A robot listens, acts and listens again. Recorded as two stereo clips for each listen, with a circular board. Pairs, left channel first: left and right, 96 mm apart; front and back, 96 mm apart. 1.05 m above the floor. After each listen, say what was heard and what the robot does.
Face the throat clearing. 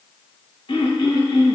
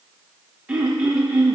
The throat clearing: 100° left. Turn 100° left.
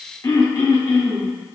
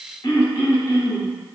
The throat clearing is now 35° left. Turn 35° left.
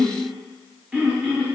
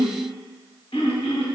The throat clearing is now 10° right. Turn 10° right.
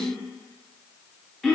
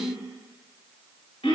Found it: throat clearing, straight ahead.